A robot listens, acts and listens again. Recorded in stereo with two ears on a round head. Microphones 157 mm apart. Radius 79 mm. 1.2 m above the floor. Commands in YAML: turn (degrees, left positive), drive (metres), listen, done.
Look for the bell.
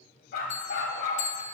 turn: 40
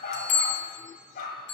turn: 95
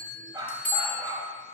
turn: 10
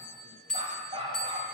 done: "Found it: a bell, straight ahead, 1 to 2 m away."